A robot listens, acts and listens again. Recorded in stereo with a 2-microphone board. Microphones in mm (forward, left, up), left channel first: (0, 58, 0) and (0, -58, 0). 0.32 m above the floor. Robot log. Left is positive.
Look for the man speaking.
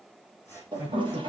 note: The man speaking: about 15° right or 165° right.
cmd yaw -15
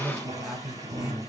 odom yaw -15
cmd yaw -30
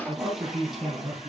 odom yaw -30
note: So it is at 15° left.
cmd yaw +15
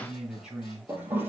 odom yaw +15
end: Facing the man speaking, over 4 m away.